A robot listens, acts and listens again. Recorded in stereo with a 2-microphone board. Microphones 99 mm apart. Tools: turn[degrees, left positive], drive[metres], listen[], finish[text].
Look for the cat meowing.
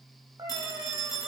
Thought: The cat meowing: about 35° right or 145° right.
Action: turn[-35]
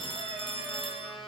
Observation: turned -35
Action: listen[]
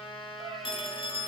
Thought: So it is at 95° right.
Action: turn[-95]
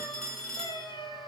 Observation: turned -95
Thought: The cat meowing is now 55° left.
Action: turn[55]
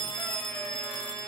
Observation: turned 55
Action: listen[]
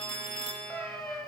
Thought: The cat meowing is now 15° left.
Action: turn[15]
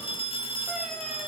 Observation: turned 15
Action: listen[]
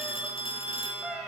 Action: finish[Found it: a cat meowing, straight ahead.]